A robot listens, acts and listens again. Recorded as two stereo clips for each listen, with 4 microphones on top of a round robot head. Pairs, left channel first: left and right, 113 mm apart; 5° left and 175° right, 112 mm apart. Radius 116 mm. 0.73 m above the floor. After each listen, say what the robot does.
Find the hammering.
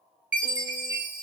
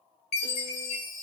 Keep listening.
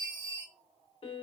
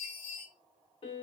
Keep listening.
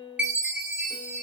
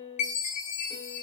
I can't make out hammering, only a chime and a piano.